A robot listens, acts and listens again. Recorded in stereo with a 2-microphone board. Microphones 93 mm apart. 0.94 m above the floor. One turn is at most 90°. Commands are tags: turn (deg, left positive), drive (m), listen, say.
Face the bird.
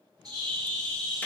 <turn deg="-40"/>
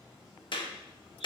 <listen/>
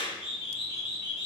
<say>Facing the bird, 2 to 4 m away.</say>